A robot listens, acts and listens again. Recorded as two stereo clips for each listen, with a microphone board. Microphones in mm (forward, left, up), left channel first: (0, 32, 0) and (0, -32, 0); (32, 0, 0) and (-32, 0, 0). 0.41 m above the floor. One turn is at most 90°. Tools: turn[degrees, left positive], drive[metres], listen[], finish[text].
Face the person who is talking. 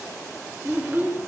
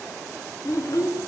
Thought: The child speaking: 30° right.
Action: turn[-30]
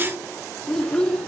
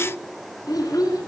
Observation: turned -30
Thought: The child speaking is now 10° left.
Action: turn[10]
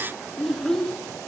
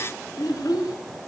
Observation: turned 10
Action: finish[Facing the child speaking, 2 to 4 m away.]